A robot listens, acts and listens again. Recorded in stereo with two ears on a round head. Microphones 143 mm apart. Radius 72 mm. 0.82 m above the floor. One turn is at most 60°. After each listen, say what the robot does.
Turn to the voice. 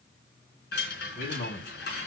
Turn 60° left.
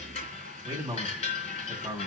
Found it: a man speaking, straight ahead, over 4 m away.